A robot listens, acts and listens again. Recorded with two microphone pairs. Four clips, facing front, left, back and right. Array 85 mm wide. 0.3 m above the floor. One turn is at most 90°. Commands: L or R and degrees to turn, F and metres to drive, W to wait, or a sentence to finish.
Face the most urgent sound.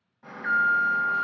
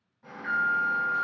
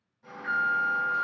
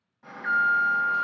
R25
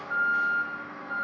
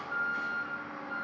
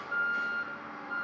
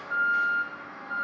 R25
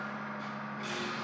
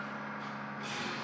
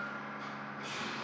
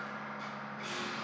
Found it: an alarm, straight ahead.